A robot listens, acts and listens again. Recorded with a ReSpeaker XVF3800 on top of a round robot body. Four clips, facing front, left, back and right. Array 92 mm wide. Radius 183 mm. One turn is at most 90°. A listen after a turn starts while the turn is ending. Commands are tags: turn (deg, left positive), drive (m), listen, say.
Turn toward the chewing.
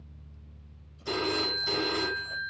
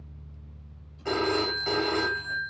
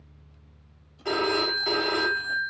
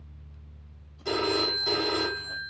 <listen/>
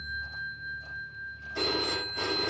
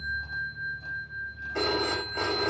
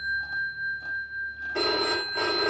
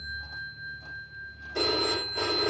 <listen/>
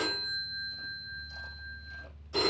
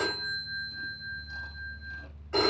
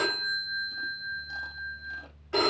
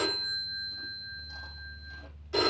<say>I can't make out chewing, only a phone ringing.</say>